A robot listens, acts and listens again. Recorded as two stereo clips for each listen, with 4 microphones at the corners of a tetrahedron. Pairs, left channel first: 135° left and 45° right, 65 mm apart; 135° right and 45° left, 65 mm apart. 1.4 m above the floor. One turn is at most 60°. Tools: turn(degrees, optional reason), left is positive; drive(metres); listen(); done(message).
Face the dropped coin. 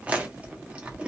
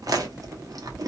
listen()
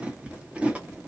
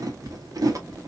listen()
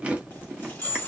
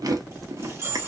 turn(degrees=60, reason="The dropped coin: 80° left.")
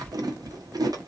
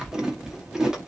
turn(degrees=20, reason="Nothing new. It was at 20° left.")
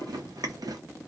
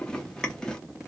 done("I heard a dropped coin from this way, but can't make it out now.")